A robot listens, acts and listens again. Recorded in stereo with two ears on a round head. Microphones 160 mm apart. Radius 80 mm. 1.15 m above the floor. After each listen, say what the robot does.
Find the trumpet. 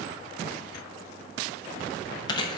Keep listening.
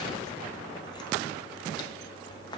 Keep listening.
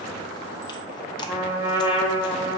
Turn 30° right.
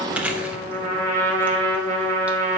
Turn 135° right.
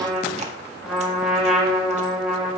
Facing the trumpet.